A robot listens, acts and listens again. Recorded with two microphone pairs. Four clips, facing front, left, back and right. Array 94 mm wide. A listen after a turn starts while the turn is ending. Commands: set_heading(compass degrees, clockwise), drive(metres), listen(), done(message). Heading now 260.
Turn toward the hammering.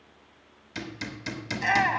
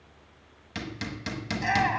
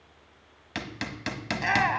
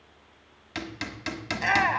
set_heading(55)
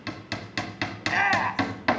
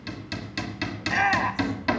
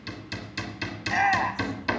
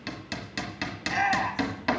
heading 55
done("Found it: hammering, straight ahead.")